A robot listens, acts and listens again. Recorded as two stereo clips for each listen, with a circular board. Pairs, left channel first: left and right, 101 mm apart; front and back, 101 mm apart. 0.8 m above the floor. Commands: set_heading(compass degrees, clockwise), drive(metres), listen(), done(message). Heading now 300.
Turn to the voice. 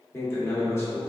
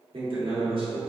set_heading(145)
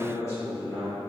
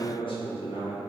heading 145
set_heading(115)
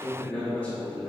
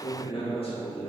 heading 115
set_heading(100)
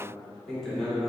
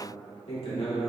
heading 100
done("Found it: a man speaking, straight ahead.")